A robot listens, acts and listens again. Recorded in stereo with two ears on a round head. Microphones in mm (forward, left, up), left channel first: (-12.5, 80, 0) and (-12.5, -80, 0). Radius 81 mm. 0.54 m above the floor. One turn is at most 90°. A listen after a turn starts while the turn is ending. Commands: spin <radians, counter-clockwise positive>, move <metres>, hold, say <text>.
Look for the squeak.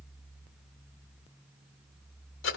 hold
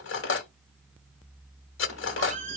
spin -0.70
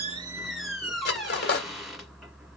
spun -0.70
say Facing the squeak, 1 to 2 m away.